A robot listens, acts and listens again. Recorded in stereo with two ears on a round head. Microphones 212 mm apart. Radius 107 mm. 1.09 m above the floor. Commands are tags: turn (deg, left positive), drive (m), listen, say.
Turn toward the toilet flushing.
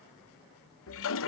<turn deg="55"/>
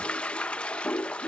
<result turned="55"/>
<say>Found it: a toilet flushing, straight ahead.</say>